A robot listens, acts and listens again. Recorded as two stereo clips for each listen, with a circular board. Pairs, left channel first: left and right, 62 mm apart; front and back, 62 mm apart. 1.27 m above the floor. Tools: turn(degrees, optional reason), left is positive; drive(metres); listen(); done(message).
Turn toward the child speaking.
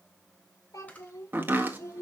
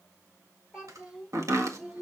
turn(degrees=115, reason="The child speaking: 115° left.")
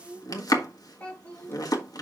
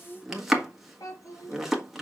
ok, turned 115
turn(degrees=25, reason="The child speaking is now 25° left.")
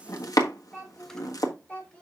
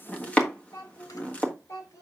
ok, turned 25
turn(degrees=20, reason="The child speaking is now 20° left.")
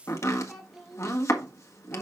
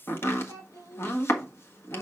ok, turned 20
done("Found it: a child speaking, straight ahead, 2 to 4 m away.")